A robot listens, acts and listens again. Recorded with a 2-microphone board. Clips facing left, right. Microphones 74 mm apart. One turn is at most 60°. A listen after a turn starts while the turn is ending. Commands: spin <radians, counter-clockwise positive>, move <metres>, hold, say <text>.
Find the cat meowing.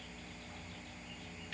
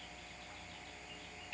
hold
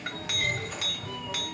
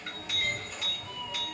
spin 0.52
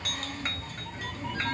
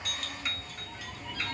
spin 1.05
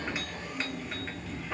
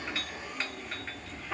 spin 0.61
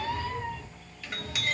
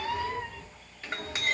spin -0.17
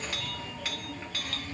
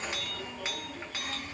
say Facing the cat meowing, 1 to 2 m away.